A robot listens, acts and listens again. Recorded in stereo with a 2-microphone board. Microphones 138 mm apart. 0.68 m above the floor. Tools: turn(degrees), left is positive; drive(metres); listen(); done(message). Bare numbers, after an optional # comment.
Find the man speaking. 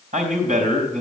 # The man speaking: about 70° right or 110° right.
turn(-70)
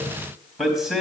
done("Found it: a man speaking, straight ahead.")